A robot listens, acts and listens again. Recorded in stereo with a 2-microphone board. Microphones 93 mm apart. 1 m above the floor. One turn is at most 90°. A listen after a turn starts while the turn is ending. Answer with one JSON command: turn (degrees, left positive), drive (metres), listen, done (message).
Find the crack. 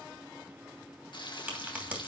{"turn": -20}
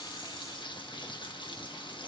{"listen": true}
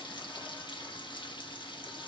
{"done": "I heard a crack, but can't make it out now. It was about straight ahead or 140° right."}